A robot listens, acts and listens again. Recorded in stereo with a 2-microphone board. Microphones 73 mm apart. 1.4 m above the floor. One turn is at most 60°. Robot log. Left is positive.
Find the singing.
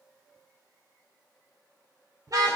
cmd idle
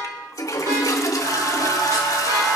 note: The singing: about 55° right or 125° right.
cmd yaw -55
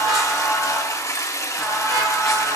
end: Found it: singing, straight ahead.